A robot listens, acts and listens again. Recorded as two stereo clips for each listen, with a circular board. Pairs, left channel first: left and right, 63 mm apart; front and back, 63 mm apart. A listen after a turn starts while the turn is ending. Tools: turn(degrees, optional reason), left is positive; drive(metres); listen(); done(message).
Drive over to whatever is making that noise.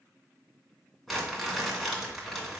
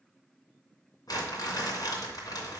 drive(metres=1.0)
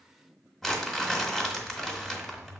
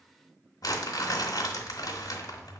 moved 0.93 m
drive(metres=1.0)
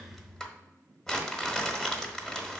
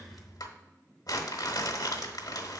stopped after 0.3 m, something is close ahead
done("I am next to the crumpling.")